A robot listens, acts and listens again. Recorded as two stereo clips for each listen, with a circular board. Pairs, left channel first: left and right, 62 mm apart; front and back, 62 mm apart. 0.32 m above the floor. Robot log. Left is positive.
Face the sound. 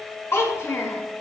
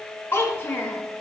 note: The child speaking: 50° left.
cmd yaw +50
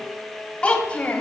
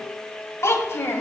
note: The child speaking is now 30° left.
cmd yaw +30
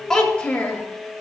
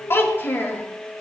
note: The child speaking is now 40° left.
cmd yaw +40
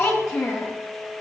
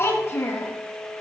note: The child speaking is now 35° left.
cmd yaw +35
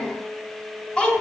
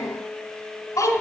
note: The child speaking is now 10° left.
cmd yaw +10
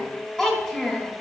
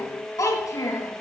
end: Facing the child speaking, 1 to 2 m away.